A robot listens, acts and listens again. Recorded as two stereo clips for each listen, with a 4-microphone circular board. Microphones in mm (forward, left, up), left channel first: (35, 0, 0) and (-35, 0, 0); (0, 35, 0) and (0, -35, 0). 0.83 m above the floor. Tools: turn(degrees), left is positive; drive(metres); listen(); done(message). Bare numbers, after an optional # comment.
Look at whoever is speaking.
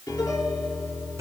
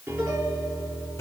listen()
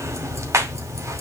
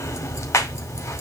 listen()
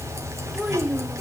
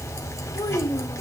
# The child speaking: 100° left.
turn(100)
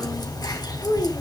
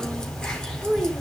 done("Facing the child speaking, 2 to 4 m away.")